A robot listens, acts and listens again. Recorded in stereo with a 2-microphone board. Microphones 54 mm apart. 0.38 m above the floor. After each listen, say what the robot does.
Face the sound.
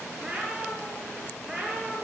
Turn 30° left.
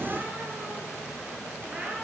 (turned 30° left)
Turn 20° right.
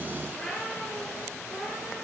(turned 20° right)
Turn 15° left.
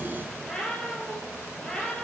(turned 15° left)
Turn 10° left.
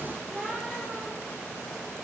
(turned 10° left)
Facing the cat meowing, 2 to 4 m away.